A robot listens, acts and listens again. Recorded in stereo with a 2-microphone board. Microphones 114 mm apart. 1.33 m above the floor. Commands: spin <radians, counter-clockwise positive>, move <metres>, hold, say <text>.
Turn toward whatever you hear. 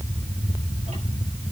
hold
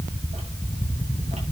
hold
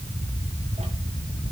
say I can't make out anything to turn to.